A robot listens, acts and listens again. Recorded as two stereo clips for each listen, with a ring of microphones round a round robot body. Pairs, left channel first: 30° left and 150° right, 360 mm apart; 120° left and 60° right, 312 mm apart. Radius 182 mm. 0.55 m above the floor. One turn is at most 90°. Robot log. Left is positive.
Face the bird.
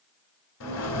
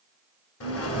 note: The bird: 80° left.
cmd yaw +80
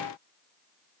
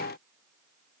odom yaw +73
cmd idle
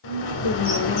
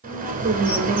end: Found it: a bird, straight ahead.